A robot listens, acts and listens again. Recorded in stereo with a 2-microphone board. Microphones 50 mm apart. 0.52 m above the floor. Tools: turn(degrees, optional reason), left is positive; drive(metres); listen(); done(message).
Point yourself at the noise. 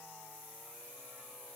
listen()
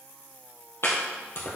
turn(degrees=60, reason="The chopping: about 60° left or 120° left.")
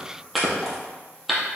done("Facing the chopping, 2 to 4 m away.")